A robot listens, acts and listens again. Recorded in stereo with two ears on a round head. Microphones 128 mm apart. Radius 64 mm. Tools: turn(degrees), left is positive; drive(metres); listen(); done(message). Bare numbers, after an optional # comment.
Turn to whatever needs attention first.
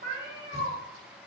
listen()
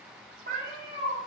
listen()
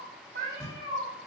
done("I can't make out anything urgent to turn to.")